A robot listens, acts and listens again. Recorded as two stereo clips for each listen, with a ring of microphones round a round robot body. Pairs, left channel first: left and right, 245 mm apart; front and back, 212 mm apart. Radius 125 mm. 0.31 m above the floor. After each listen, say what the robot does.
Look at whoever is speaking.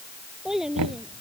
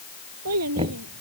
Turn 180° left.
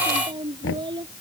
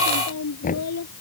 Turn 20° right.
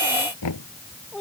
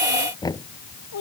Found it: a child speaking, straight ahead.